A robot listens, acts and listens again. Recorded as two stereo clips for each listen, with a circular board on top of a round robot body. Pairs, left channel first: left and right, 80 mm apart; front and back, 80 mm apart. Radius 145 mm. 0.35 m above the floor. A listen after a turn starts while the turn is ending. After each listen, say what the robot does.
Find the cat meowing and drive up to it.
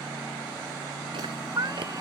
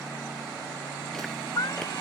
Turn 45° right.
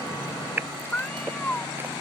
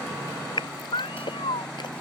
Turn 15° left.
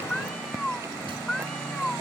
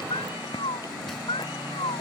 Drive 1.0 m forward.
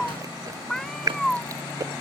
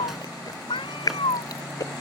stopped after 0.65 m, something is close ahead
Blocked. The cat meowing is further on, straight ahead.